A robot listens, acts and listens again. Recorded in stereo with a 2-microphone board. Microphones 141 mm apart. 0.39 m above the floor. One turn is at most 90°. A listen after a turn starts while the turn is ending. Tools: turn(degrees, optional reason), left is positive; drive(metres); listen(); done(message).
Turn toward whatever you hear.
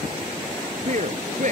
turn(degrees=-60, reason="The man speaking: about 60° right or 120° right.")
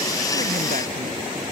listen()
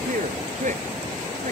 turn(degrees=-60, reason="So it is at 60° right.")
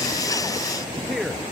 done("Found it: a man speaking, straight ahead.")